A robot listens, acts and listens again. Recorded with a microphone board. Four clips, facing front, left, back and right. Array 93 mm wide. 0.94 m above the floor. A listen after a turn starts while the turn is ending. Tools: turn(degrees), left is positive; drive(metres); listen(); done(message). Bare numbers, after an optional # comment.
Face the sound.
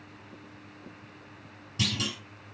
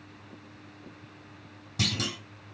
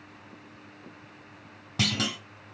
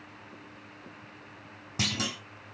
# The clunk: 155° right.
turn(-155)
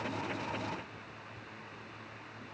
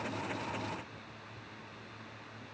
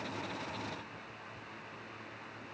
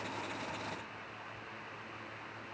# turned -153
done("I heard a clunk from this way, but can't make it out now.")